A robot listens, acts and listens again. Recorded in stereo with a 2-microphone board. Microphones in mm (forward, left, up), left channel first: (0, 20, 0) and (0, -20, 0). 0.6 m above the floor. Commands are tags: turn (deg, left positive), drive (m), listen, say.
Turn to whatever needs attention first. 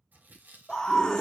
<turn deg="30"/>
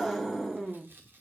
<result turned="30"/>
<turn deg="-10"/>
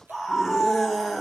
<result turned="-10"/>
<say>Found it: a scream, straight ahead, under 1 m away.</say>